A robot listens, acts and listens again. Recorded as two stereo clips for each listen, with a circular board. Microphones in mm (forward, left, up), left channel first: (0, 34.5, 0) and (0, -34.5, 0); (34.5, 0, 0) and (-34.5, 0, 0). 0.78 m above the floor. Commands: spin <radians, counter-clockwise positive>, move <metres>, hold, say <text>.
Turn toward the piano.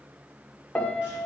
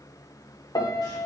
spin 0.26
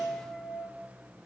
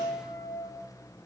say Facing the piano, 1 to 2 m away.